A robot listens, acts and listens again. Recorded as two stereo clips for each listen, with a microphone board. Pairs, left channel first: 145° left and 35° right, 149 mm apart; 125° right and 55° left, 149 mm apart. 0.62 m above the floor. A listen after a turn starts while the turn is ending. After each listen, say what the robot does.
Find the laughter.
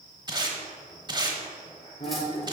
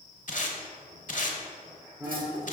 Turn 120° left.
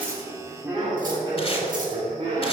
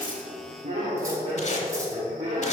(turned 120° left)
Facing the laughter, 1 to 2 m away.